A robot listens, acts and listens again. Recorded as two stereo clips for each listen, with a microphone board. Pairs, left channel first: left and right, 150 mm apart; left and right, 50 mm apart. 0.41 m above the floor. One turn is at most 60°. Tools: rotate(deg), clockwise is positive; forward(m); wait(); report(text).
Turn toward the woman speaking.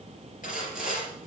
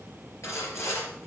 wait()
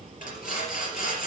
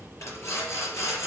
wait()
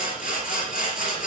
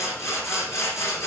report("I can't make out a woman speaking to turn to.")